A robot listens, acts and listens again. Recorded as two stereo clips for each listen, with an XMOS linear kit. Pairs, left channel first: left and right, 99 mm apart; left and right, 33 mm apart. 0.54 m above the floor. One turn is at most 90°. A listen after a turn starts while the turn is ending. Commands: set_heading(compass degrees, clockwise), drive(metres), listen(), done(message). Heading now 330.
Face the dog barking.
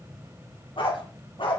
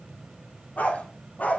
set_heading(275)
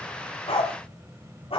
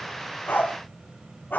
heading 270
set_heading(200)
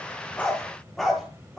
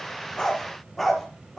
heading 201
done("Found it: a dog barking, straight ahead.")